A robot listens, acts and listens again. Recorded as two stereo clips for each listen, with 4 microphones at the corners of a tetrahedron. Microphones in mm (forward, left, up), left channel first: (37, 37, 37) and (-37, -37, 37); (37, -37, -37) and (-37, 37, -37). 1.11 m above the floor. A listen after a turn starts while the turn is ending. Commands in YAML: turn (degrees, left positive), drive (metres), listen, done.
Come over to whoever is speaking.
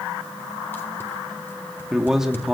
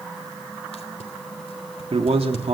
turn: 140
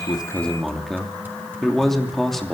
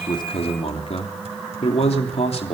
turn: -40
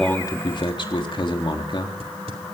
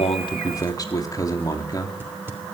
turn: 10
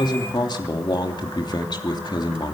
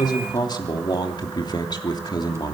drive: 1.0
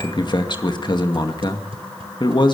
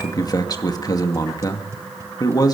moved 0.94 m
drive: 1.0
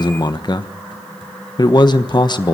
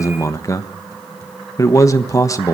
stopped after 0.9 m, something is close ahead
turn: 10
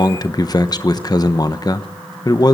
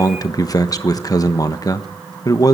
done: "Arrived at the man speaking, straight ahead."